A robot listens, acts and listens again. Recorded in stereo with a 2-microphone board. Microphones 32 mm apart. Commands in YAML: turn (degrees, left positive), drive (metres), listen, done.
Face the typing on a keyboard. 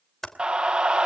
turn: 30
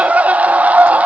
listen: true
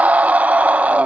listen: true
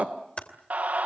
turn: 140
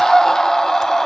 listen: true
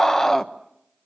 listen: true
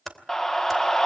turn: 10
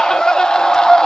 listen: true
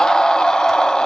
listen: true
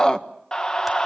done: "Facing where the typing on a keyboard came from. I can't hear it now."